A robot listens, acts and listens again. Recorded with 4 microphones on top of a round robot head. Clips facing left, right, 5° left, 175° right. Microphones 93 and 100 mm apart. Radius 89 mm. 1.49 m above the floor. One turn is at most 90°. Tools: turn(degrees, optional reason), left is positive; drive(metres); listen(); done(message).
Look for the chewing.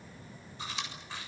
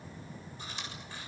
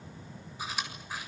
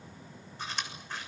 turn(degrees=85, reason="The chewing: 85° left.")
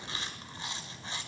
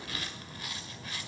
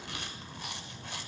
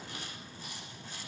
turn(degrees=25, reason="The chewing is now 25° left.")
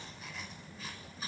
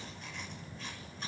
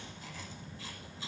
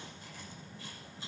done("Found it: chewing, straight ahead, over 4 m away.")